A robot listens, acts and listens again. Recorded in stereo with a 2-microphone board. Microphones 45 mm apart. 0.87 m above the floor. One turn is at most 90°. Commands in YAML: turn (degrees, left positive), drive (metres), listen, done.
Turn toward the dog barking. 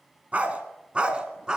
turn: -20
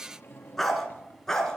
turn: 10
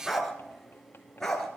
turn: 10
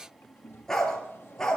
turn: 10
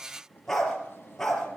done: "Found it: a dog barking, straight ahead, over 4 m away."